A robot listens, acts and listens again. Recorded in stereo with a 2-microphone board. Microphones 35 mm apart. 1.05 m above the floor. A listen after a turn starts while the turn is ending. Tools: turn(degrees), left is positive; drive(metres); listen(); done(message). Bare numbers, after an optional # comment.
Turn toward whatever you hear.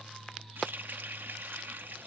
# The running tap: about 75° right or 105° right.
turn(-75)
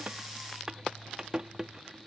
# So it is at 20° right.
turn(-20)
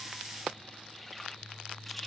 listen()
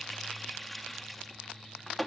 done("Found it: a running tap, straight ahead.")